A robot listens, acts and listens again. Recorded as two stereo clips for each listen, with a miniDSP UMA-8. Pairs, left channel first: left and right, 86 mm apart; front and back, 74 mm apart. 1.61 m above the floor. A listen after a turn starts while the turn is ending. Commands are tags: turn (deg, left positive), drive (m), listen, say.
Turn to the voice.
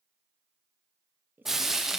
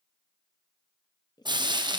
<turn deg="-25"/>
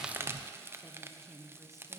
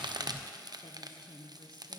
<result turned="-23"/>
<say>Facing the woman speaking.</say>